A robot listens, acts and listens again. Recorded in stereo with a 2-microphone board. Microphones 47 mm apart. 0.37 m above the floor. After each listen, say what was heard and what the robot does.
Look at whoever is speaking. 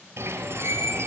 Keep listening.
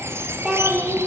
Turn 30° right.
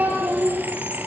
So it is at 145° right. Turn 145° right.
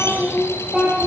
The child speaking is now 10° right. Turn 10° right.
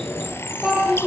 Facing the child speaking, over 4 m away.